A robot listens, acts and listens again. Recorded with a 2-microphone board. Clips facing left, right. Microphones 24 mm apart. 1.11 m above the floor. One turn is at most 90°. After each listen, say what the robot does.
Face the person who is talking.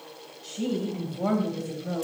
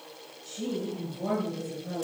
Turn 65° left.
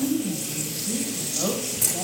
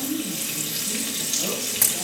Turn 65° left.
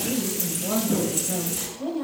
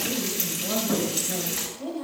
Turn 20° left.
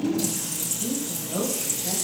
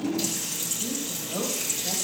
Found it: a woman speaking, straight ahead, over 4 m away.